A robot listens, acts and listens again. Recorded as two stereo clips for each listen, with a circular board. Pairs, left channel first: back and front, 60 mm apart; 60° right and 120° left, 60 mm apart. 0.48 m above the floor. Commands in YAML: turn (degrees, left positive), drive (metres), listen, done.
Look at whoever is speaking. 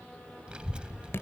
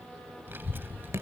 turn: 70
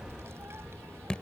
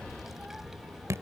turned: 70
turn: 35
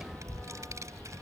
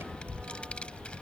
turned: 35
turn: 10
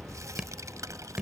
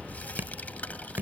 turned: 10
done: "Found it: a child speaking, straight ahead."